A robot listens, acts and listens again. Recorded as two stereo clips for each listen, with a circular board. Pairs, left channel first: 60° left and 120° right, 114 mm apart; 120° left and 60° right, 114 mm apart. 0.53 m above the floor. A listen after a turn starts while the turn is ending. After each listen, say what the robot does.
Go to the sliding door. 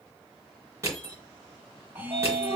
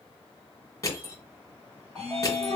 Turn 140° right.
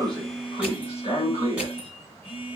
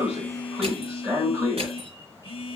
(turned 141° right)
Drive 1.0 m forward.
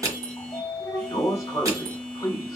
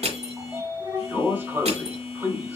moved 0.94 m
Turn 10° left.
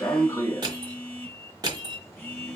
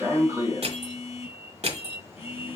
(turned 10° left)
Drive 1.0 m forward.
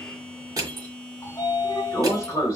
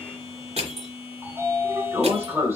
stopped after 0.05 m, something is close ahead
Arrived at the sliding door, straight ahead.